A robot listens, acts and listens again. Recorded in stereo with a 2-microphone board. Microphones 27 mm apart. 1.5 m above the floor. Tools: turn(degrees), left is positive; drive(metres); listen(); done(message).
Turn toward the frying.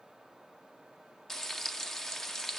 turn(degrees=30)
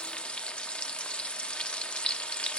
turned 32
turn(degrees=135)
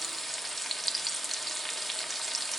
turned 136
done("Found it: frying, straight ahead, under 1 m away.")